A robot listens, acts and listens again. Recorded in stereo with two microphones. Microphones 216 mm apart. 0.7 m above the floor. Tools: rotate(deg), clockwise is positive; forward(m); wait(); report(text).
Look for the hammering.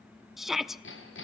rotate(-60)
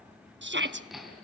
report("Facing the hammering.")